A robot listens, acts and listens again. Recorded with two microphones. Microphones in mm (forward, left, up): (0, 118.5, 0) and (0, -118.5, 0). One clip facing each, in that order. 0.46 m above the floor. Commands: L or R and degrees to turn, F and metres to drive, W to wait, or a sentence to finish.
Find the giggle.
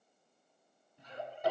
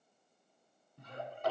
R55
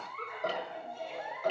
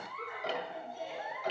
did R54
Facing the giggle.